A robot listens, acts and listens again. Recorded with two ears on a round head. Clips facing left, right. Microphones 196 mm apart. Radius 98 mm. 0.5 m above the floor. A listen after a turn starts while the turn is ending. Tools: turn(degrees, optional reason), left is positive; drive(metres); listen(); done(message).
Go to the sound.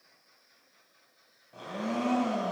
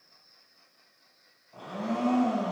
turn(degrees=30, reason="The blender: about 30° left or 150° left.")
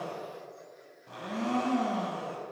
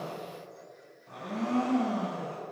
turn(degrees=120, reason="So it is at 120° left.")
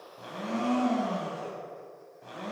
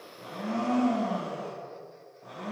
turn(degrees=55, reason="The blender is now 55° left.")
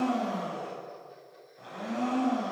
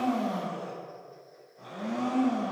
turn(degrees=10, reason="The blender is now 10° left.")
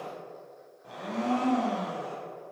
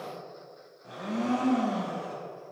drive(metres=1.0)
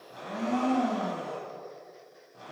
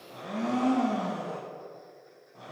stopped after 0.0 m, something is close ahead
turn(degrees=10, reason="The blender is now 10° left.")
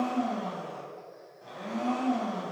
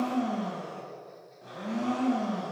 done("Blocked. The blender is further on, straight ahead.")